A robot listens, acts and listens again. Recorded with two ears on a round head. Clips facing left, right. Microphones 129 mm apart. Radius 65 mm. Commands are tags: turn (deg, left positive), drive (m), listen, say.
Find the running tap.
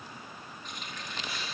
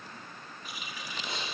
<turn deg="-30"/>
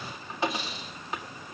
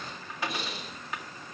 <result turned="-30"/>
<turn deg="25"/>
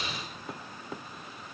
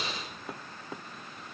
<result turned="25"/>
<listen/>
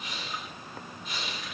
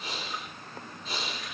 <say>Found it: a running tap, straight ahead.</say>